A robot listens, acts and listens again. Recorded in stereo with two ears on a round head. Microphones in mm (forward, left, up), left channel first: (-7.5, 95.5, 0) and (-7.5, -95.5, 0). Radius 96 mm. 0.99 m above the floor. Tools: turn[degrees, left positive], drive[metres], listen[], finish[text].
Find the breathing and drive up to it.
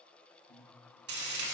Thought: The breathing: about 60° left or 120° left.
Action: turn[60]
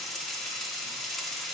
Action: listen[]
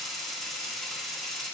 Action: listen[]
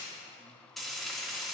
Action: finish[I heard breathing, but can't make it out now. It was about straight ahead or 60° left. I did not reach it.]